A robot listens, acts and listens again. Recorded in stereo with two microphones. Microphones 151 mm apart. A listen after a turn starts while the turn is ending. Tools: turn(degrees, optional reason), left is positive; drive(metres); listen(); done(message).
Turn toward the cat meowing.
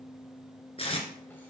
listen()
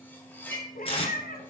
turn(degrees=70, reason="The cat meowing: about 70° left or 110° left.")
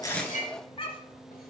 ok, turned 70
turn(degrees=40, reason="So it is at 40° left.")
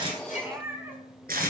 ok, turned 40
turn(degrees=-15, reason="The cat meowing is now 15° right.")
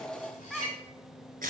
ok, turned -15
done("Found it: a cat meowing, straight ahead, 1 to 2 m away.")